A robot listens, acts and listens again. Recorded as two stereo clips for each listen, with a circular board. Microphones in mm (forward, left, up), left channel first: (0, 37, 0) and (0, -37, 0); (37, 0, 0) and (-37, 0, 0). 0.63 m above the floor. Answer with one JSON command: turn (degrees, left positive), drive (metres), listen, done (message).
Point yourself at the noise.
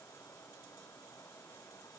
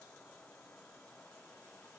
{"listen": true}
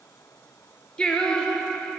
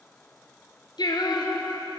{"turn": 10}
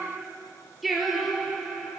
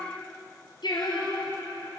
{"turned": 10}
{"done": "Facing the singing."}